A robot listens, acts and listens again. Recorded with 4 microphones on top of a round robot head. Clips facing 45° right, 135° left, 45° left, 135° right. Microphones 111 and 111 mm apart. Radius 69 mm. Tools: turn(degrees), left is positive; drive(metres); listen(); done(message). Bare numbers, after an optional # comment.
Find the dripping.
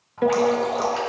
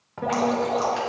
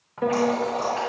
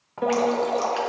# The dripping: 135° right.
turn(-135)
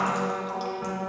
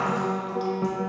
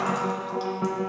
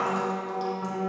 listen()
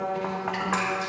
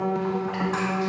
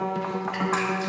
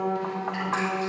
listen()
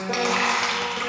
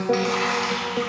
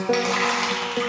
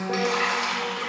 done("Facing the dripping, 1 to 2 m away.")